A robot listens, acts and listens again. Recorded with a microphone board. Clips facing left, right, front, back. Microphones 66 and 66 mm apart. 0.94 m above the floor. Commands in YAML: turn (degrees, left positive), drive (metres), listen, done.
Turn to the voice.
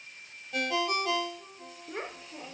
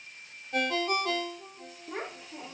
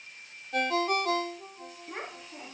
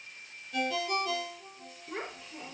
turn: -70
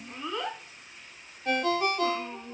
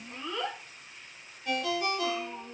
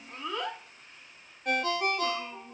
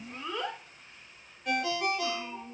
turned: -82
turn: 25
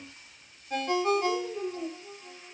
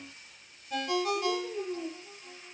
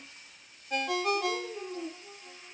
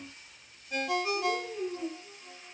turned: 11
turn: 20
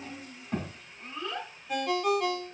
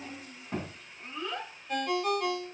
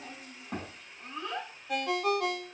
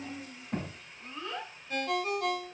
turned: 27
done: "Found it: a child speaking, straight ahead, over 4 m away."